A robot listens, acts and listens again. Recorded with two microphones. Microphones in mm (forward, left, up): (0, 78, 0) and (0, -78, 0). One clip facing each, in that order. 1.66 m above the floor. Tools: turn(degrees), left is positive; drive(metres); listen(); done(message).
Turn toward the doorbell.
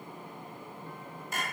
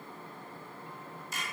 listen()
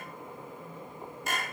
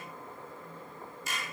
listen()
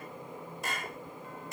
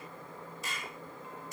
done("I can't make out a doorbell to turn to.")